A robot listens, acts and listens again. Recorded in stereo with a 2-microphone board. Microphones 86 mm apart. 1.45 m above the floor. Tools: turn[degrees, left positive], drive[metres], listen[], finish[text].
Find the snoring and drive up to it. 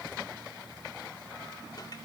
Action: listen[]
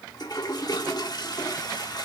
Action: listen[]
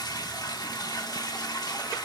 Action: finish[I can't make out snoring to turn to.]